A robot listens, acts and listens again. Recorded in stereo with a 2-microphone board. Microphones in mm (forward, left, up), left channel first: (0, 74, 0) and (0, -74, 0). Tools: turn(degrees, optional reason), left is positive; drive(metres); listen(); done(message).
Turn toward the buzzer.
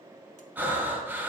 listen()
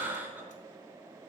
listen()
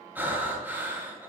done("I can't make out a buzzer, only breathing.")